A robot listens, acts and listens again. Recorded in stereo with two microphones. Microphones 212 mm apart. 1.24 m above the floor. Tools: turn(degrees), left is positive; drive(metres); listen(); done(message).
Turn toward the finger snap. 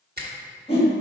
turn(degrees=-50)
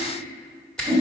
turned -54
done("Found it: a finger snap, straight ahead.")